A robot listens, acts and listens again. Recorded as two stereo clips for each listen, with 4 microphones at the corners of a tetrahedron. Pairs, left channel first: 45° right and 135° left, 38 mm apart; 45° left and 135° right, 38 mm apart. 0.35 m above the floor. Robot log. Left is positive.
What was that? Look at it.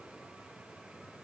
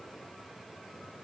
cmd idle
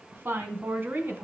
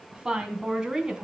note: The woman speaking: 155° left.
cmd yaw +155
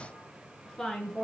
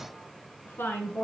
note: The woman speaking is now 30° left.
cmd yaw +30
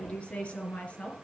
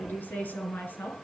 note: The woman speaking is now 10° left.
cmd yaw +10
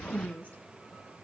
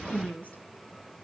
end: Found it: a woman speaking, straight ahead, over 4 m away.